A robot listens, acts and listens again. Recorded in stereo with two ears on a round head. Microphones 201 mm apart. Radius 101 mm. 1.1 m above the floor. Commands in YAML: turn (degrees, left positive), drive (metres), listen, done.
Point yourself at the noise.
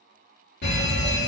turn: 45
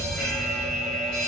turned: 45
done: "Found it: a fire alarm, straight ahead."